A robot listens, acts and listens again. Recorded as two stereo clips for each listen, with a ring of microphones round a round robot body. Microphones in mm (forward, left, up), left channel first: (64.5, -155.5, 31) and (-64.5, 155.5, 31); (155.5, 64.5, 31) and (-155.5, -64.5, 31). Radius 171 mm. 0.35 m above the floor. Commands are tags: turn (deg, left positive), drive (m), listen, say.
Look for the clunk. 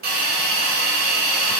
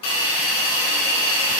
<listen/>
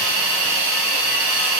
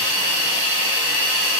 <listen/>
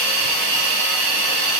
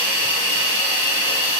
<say>I can't make out a clunk to turn to.</say>